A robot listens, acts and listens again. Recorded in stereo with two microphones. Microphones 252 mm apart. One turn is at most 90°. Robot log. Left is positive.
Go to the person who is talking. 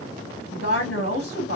note: The woman speaking: about 65° left or 115° left.
cmd yaw +65
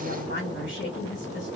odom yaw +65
note: So it is at 50° left.
cmd yaw +50
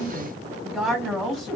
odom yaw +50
cmd fwd 1.0
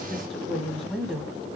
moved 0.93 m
cmd fwd 1.0
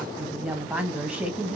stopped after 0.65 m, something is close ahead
end: I am next to the woman speaking.